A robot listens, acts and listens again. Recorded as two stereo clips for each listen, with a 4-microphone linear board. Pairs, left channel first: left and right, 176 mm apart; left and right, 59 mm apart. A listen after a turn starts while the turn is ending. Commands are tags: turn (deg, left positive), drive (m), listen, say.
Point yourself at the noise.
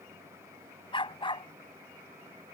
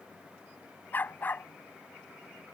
<turn deg="30"/>
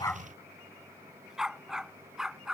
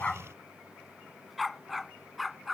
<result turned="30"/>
<say>Found it: a dog barking, straight ahead.</say>